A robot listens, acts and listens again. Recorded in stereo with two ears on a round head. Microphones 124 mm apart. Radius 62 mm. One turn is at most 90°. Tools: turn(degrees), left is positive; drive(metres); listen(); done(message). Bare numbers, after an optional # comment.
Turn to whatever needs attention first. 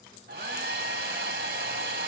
listen()
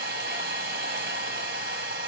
listen()
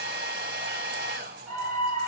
turn(-30)
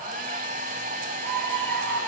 # So it is at 140° right.
turn(-90)
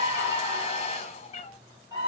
# The scream is now 25° right.
turn(-25)
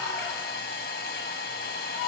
done("Found it: a scream, straight ahead, 2 to 4 m away.")